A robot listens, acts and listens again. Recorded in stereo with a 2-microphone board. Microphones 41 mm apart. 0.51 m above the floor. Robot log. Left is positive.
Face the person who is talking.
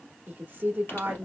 note: The woman speaking: about 45° right or 135° right.
cmd yaw -45
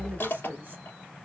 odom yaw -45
note: So it is at 75° right.
cmd yaw -75
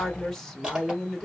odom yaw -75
note: The woman speaking is now 10° left.
cmd yaw +10
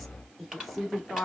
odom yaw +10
end: Found it: a woman speaking, straight ahead.